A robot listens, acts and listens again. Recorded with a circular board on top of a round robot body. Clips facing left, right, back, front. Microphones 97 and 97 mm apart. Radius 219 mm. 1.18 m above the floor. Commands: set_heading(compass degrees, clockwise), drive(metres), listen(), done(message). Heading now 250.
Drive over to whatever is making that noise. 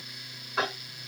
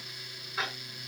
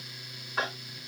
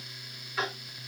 set_heading(125)
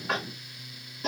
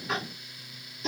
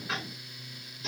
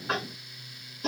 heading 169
set_heading(124)
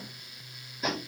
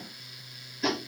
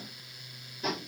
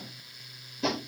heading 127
drive(1.0)
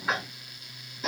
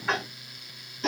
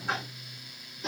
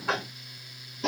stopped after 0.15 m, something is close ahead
done("Something is in my way. I am facing the tapping but have not reached it.")